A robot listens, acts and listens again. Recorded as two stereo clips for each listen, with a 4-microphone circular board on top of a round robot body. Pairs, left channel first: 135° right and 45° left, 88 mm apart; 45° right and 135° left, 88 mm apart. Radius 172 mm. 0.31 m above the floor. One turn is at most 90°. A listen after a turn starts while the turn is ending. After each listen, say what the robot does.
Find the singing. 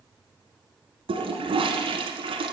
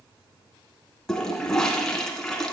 Keep listening.
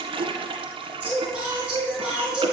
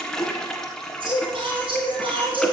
Turn 90° left.
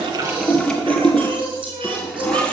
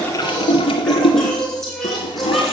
Turn 45° left.
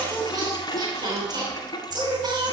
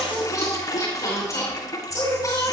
Facing the singing, over 4 m away.